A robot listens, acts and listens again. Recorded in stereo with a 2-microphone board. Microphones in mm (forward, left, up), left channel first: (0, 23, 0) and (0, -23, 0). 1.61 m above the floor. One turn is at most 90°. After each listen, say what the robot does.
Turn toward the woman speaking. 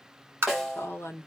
Turn 60° left.
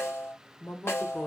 Turn 45° left.
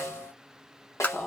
Turn 15° left.
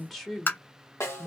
Found it: a woman speaking, straight ahead.